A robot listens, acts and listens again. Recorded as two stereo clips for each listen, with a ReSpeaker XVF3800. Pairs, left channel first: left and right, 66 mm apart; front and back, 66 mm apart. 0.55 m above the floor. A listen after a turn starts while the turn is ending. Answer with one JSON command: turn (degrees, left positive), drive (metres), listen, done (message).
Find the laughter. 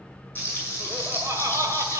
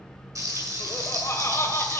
{"turn": -50}
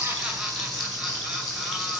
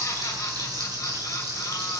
{"listen": true}
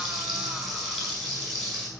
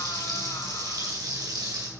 {"listen": true}
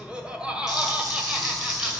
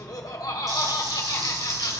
{"turn": -15}
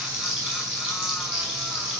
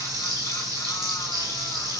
{"listen": true}
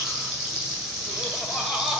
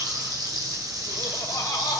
{"done": "Found it: laughter, straight ahead, 2 to 4 m away."}